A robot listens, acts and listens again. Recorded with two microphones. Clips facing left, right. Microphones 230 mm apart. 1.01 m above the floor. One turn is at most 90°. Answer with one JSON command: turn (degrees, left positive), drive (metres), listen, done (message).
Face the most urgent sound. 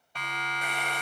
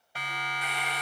{"turn": -30}
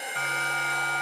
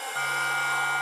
{"turn": 25}
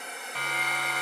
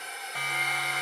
{"turn": -10}
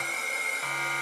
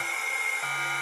{"done": "Facing the siren, over 4 m away."}